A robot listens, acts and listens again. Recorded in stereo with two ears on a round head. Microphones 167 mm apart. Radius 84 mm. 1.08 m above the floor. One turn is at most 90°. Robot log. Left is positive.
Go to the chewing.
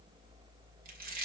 note: The chewing: about 50° right or 130° right.
cmd yaw -50
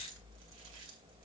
note: So it is at 75° right.
cmd yaw -75
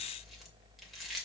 cmd fwd 1.0
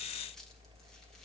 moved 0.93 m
cmd idle
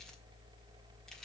cmd idle
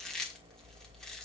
cmd fwd 1.0
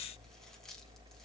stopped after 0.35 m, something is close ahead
cmd idle
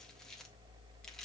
cmd idle
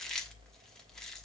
end: Arrived at the chewing, straight ahead.